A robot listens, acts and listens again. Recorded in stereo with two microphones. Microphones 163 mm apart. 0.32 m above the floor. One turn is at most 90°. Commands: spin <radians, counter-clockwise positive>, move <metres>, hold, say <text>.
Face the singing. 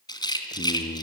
spin 1.22
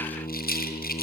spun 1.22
spin 0.61
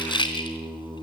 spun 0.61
spin -0.26
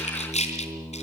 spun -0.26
say Facing the singing, over 4 m away.